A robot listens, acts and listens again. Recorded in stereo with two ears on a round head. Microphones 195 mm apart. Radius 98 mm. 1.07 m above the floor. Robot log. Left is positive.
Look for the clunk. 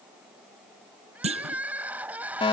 note: The clunk: about 30° right or 150° right.
cmd yaw -30
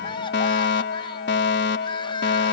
cmd idle
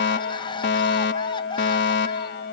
end: I heard a clunk, but can't make it out now. It was about straight ahead or 120° right.